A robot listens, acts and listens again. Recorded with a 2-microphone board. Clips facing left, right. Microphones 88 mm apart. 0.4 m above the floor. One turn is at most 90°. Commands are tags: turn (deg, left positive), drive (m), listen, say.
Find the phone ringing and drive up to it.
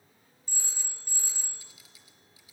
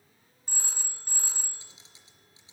<turn deg="-60"/>
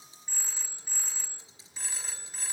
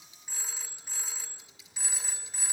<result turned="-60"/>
<drive m="1.0"/>
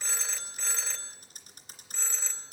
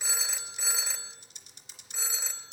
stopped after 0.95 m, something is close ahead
<turn deg="-10"/>
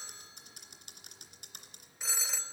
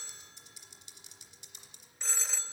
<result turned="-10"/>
<say>Arrived at the phone ringing, straight ahead.</say>